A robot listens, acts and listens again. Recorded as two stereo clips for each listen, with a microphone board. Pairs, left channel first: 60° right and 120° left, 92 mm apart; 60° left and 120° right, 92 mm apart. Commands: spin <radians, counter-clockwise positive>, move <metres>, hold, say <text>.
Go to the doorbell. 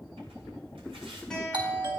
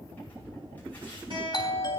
spin 1.66
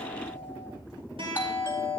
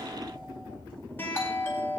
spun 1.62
move 1.0
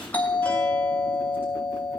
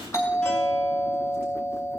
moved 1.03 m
spin 0.17
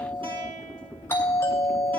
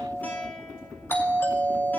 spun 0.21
move 1.0
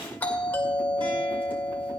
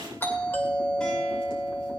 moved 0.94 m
move 1.0
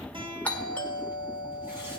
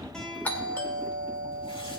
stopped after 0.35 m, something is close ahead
say I am next to the doorbell.